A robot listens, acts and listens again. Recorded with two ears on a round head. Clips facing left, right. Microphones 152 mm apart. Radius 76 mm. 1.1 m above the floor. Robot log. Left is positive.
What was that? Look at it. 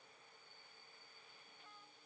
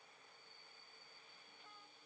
cmd idle
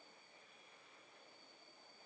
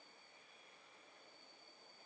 cmd idle
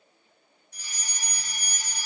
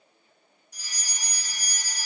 cmd yaw +30
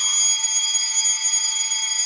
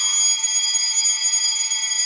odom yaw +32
note: So it is at 30° right.
cmd yaw -30
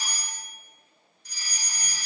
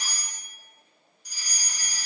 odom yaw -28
end: Found it: a fire alarm, straight ahead, 2 to 4 m away.